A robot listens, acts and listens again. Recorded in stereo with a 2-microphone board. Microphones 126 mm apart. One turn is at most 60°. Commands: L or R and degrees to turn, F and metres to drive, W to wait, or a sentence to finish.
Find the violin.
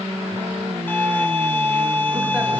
L15
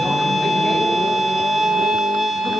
Facing the violin, 1 to 2 m away.